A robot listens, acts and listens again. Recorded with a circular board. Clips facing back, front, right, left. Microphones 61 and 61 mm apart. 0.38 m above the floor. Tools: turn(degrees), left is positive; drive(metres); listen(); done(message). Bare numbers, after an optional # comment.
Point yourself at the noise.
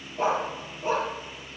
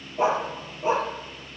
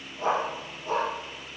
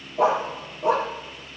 # The dog barking: 70° left.
turn(70)
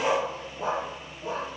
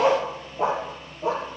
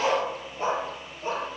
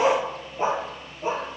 # The dog barking is now 20° left.
turn(20)
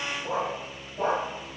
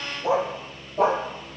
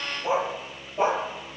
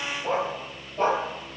# The dog barking is now 10° right.
turn(-10)
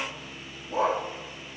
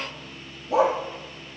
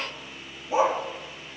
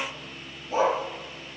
# The dog barking is now 15° right.
turn(-15)
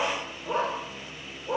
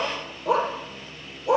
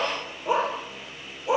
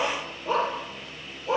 # The dog barking is now 15° right.
turn(-15)
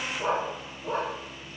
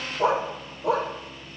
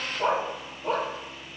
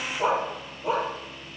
done("Found it: a dog barking, straight ahead.")